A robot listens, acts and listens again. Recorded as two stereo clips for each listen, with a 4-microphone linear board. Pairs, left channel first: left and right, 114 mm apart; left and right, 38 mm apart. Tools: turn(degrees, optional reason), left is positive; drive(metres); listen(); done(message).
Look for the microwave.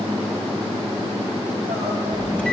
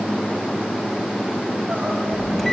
turn(degrees=30)
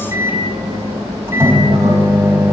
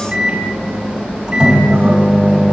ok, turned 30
turn(degrees=-20, reason="So it is at 20° right.")
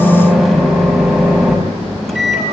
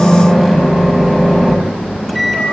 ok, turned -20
done("Facing the microwave, over 4 m away.")